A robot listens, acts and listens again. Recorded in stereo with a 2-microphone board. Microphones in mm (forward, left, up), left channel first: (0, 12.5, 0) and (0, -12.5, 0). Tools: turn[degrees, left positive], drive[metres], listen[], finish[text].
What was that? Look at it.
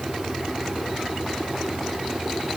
Action: listen[]
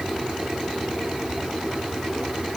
Action: listen[]
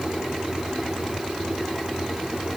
Action: finish[I can't make out anything to turn to.]